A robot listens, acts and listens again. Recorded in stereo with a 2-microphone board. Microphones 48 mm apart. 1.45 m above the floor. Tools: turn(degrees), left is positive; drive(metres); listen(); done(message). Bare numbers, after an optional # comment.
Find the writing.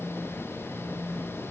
listen()
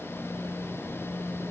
listen()
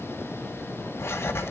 # The writing: about 60° left or 120° left.
turn(60)
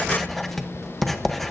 done("Facing the writing.")